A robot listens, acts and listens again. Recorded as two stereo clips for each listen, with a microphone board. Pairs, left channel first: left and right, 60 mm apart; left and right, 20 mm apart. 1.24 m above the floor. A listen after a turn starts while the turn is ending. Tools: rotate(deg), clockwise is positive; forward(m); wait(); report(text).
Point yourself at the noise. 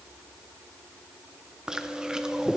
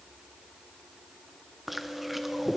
rotate(30)
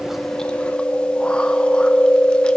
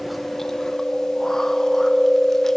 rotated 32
rotate(-20)
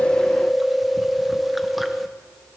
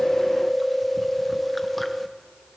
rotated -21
report("Facing the chewing.")